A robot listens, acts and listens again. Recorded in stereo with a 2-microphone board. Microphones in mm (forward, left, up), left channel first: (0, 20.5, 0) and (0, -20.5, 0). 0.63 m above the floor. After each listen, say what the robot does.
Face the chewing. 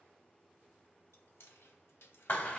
Turn 90° left.
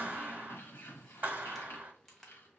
Found it: chewing, straight ahead.